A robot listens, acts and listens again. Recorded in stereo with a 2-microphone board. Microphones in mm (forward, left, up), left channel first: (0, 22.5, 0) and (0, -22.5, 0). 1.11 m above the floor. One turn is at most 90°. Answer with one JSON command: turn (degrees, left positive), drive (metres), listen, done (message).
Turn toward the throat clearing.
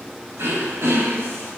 {"turn": -70}
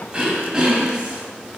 {"turn": -20}
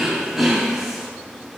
{"turn": -10}
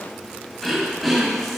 {"done": "Found it: throat clearing, straight ahead."}